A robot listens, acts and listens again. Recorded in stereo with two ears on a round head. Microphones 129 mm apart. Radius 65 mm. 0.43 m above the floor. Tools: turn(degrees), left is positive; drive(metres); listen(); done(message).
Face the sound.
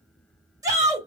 turn(degrees=-25)
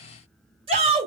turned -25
turn(degrees=-125)
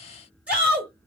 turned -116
turn(degrees=-10)
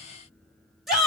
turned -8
done("Facing the shout.")